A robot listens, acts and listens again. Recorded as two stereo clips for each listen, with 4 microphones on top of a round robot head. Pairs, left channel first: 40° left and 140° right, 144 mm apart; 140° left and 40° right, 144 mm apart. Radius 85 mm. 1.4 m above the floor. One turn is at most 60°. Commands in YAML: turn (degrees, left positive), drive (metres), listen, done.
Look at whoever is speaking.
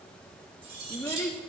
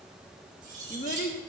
turn: 60
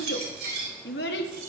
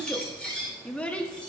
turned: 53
turn: 55
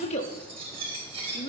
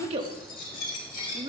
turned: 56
done: "Facing the child speaking, 1 to 2 m away."